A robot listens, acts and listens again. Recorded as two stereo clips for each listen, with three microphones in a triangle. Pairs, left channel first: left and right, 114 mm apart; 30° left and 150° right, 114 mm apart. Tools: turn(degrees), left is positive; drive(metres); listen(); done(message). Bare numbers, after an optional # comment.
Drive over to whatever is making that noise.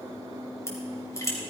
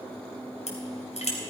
# The crushing: 25° left.
turn(25)
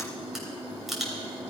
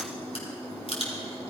drive(1.0)
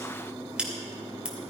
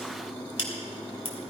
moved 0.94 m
# The crushing is now 10° right.
turn(-10)
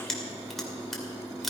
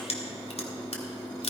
drive(1.0)
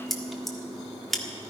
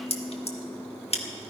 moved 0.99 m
drive(1.0)
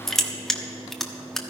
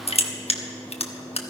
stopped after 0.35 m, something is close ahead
done("I am next to the crushing.")